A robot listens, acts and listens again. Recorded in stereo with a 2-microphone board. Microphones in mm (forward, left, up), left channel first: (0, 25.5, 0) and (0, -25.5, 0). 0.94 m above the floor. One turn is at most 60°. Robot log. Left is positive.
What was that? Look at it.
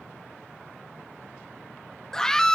cmd yaw +30
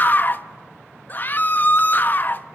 note: So it is at 140° left.
cmd yaw +60
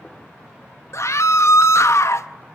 note: The scream is now 105° left.
cmd yaw +60
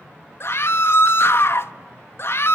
note: The scream is now 60° left.
cmd yaw +60
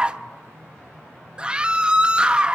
note: The scream is now 15° right.
cmd yaw -15
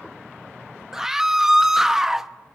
end: Facing the scream.